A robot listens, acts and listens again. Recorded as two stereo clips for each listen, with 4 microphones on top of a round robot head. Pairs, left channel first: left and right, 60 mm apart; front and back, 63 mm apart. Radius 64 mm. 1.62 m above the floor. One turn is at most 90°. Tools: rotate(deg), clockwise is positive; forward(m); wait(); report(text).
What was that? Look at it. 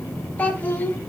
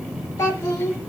rotate(-35)
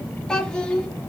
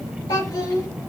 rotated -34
rotate(-20)
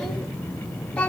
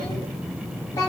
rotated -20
rotate(-30)
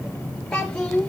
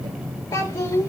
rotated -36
rotate(-15)
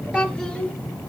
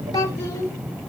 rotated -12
rotate(-15)
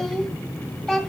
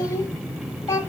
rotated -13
report("Found it: a child speaking, straight ahead.")